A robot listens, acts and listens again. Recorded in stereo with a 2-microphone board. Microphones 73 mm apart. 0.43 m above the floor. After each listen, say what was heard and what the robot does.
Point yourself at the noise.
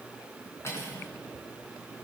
The cutlery clinking: about 40° left or 140° left. Turn 40° left.
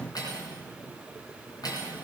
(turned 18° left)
So it is at 125° left. Turn 125° left.
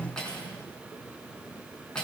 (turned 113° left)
The cutlery clinking is now 10° left. Turn 10° left.
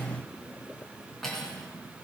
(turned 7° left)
Facing the cutlery clinking.